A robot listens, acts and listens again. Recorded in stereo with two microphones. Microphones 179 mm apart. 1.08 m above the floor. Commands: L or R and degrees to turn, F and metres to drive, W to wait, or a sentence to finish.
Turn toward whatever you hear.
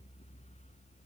W
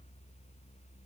W
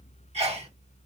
R35
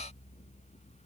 W
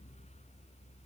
I heard a sneeze, but can't make it out now. It was about straight ahead or 110° right.